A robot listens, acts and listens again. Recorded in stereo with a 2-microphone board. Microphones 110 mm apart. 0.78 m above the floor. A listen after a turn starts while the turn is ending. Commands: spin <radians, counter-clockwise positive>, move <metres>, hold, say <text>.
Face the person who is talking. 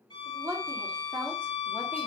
spin -0.35
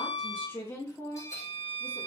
spin 0.52
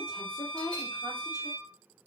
spin 0.52
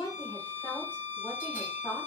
spin 0.35
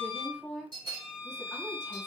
say Found it: a woman speaking, straight ahead, 2 to 4 m away.